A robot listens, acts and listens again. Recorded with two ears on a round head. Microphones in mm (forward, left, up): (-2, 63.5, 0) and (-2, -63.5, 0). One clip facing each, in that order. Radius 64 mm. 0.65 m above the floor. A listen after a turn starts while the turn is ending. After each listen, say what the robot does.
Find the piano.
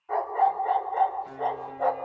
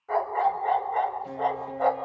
Turn 25° right.
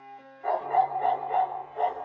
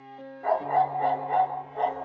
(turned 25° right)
Keep listening.
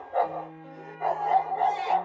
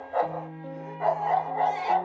Turn 130° right.
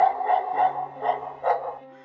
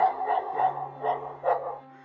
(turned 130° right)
Turn 25° left.
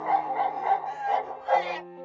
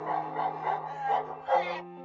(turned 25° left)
Facing the piano, under 1 m away.